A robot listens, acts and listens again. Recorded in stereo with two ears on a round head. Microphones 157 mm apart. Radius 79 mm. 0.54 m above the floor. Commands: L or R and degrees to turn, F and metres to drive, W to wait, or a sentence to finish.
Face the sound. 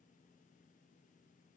W
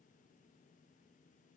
W
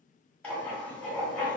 L30
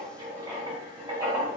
R20
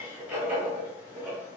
R10
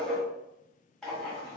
Found it: writing, straight ahead, 1 to 2 m away.